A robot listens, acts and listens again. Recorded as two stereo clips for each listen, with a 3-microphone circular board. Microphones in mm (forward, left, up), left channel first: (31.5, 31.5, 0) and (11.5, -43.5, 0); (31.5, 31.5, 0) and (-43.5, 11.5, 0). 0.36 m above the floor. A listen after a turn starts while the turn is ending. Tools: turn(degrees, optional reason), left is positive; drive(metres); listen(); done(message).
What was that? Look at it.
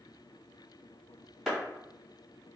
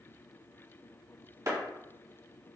turn(degrees=165, reason="The clap: 165° left.")
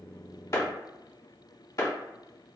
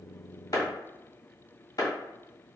turn(degrees=40, reason="The clap is now 40° left.")
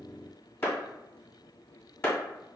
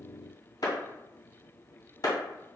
turn(degrees=20, reason="The clap is now 20° left.")
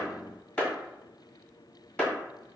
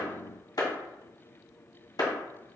done("Facing the clap.")